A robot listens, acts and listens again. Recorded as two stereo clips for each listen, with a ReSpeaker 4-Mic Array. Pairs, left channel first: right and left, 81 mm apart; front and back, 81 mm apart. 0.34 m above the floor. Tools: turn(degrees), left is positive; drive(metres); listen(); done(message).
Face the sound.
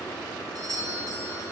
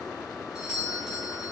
turn(degrees=100)
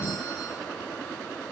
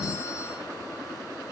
listen()
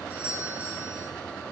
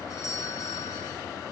turn(degrees=20)
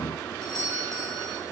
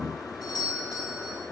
done("Found it: a doorbell, straight ahead, 2 to 4 m away.")